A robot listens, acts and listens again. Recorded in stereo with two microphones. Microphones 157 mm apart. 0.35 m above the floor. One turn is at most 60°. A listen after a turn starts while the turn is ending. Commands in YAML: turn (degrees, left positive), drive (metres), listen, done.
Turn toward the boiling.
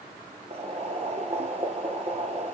turn: -45
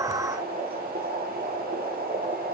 turn: -60
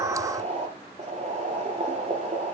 turn: -45
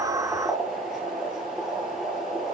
done: "Facing the boiling, 2 to 4 m away."